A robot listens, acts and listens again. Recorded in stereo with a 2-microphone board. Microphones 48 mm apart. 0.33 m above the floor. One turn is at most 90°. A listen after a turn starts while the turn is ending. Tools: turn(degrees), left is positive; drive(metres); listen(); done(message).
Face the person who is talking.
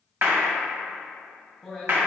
turn(degrees=30)
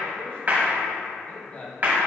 turn(degrees=90)
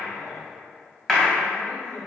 turn(degrees=45)
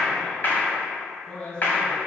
turn(degrees=25)
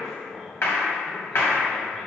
turn(degrees=-10)
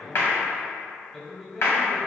done("Facing the man speaking.")